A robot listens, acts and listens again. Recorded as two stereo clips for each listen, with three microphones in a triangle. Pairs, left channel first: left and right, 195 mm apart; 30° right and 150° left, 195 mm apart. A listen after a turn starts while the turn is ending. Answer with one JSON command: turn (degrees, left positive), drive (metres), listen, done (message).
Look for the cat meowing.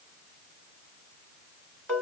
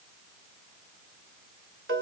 {"listen": true}
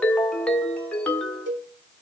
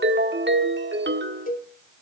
{"listen": true}
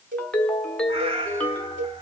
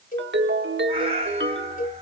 {"turn": -155}
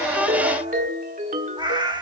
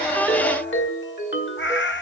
{"turn": -20}
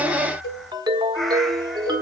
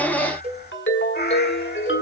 {"done": "Facing the cat meowing."}